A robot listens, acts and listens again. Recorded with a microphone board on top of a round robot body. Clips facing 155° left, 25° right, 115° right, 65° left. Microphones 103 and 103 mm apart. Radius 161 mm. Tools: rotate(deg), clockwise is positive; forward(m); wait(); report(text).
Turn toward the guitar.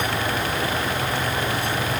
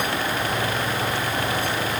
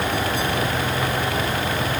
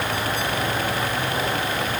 wait()
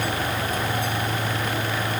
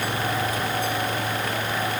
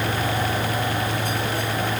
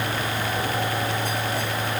wait()
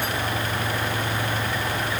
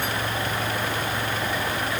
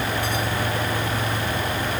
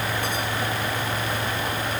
report("I can't make out a guitar.")